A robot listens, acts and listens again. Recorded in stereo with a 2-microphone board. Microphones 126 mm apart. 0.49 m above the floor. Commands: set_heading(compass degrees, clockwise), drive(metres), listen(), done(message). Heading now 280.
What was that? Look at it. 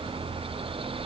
listen()
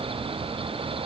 listen()
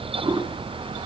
set_heading(320)
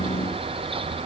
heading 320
listen()
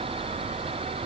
listen()
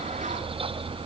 done("I heard a toilet flushing, but can't make it out now. It was about straight ahead or 100° right.")